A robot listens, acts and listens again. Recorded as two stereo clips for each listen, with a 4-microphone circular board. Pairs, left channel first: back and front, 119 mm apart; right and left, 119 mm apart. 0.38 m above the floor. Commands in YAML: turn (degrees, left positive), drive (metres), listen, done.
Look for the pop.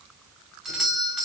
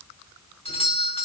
listen: true
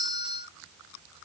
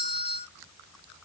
listen: true
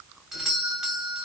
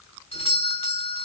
done: "I can't make out a pop, only a doorbell."